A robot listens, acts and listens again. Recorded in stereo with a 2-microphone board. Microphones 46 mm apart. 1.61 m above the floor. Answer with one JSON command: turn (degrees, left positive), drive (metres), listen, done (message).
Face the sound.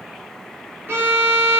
{"turn": -50}
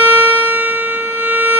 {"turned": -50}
{"done": "Facing the violin."}